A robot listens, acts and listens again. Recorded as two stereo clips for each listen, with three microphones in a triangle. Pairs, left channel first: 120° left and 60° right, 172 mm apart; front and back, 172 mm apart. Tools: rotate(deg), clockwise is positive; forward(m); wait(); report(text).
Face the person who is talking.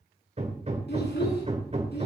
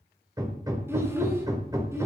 rotate(-105)
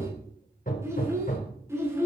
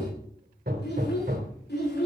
rotate(-15)
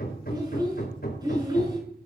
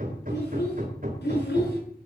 report("Found it: a child speaking, straight ahead, over 4 m away.")